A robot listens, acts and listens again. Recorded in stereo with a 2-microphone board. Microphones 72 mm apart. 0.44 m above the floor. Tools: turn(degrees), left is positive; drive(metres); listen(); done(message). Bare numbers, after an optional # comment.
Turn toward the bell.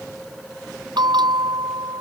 turn(-90)
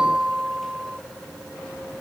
# So it is at 10° right.
turn(-10)
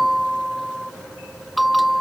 done("Facing the bell.")